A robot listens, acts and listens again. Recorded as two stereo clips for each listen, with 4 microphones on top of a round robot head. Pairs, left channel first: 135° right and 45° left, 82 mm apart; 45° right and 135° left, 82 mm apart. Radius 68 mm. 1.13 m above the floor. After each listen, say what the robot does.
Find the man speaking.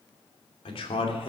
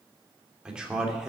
Turn 145° right.
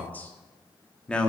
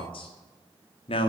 Turn 55° right.
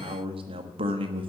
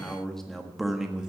Turn 50° left.
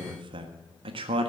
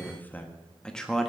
Turn 40° left.
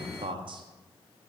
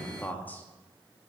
Turn 25° left.
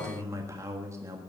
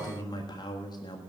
Turn 10° right.
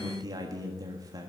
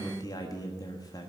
Facing the man speaking, 1 to 2 m away.